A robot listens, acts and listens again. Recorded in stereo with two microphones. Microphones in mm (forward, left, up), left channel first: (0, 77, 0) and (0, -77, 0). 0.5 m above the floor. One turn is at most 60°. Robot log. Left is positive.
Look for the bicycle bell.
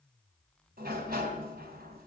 cmd idle
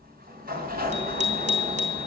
note: The bicycle bell: about 50° right or 130° right.
cmd yaw -50
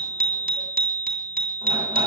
note: So it is at 80° right.
cmd yaw -60
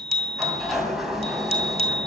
note: The bicycle bell is now 45° right.
cmd yaw -45
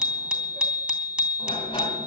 end: Facing the bicycle bell, 2 to 4 m away.